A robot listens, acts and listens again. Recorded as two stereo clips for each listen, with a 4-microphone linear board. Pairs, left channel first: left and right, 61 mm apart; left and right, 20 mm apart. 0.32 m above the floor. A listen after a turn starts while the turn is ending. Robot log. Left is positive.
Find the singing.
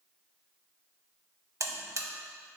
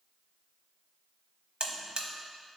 cmd idle
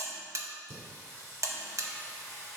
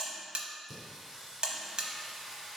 note: The singing: about 45° right or 135° right.
cmd yaw -45
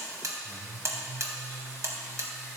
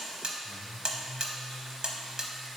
note: So it is at 10° right.
cmd yaw -10
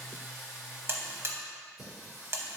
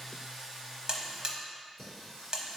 end: Found it: singing, straight ahead.